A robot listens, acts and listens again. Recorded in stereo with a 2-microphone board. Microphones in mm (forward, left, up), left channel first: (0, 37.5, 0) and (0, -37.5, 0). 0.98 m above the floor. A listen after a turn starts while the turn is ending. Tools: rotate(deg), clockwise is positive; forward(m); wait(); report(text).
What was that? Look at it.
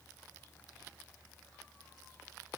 wait()
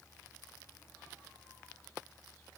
wait()
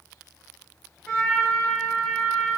rotate(-30)
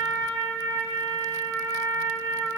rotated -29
rotate(-140)
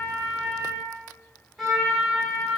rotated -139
report("Facing the trumpet, 1 to 2 m away.")